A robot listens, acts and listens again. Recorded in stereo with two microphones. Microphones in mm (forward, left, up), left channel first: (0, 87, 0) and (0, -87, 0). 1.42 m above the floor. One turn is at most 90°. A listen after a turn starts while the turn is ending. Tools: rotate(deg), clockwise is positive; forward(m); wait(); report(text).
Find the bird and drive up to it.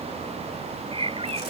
rotate(35)
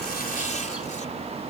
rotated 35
wait()
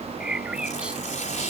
forward(1.0)
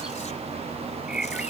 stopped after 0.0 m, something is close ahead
report("Something is in my way. I am facing the bird but have not reached it.")